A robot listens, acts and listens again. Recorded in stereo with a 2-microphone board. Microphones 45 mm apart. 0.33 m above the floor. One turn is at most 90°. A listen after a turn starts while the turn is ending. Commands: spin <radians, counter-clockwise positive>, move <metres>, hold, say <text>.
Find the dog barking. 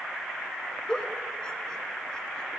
hold
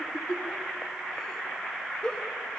hold
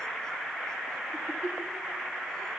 say I can't make out a dog barking to turn to.